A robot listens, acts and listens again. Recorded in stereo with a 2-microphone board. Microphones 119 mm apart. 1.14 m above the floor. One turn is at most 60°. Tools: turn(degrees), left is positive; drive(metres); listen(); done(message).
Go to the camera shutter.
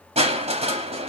listen()
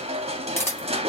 turn(degrees=20)
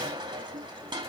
listen()
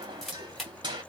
drive(metres=1.0)
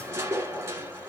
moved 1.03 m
listen()
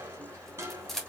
drive(metres=1.0)
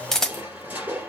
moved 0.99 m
drive(metres=1.0)
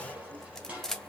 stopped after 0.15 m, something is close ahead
done("I am next to the camera shutter.")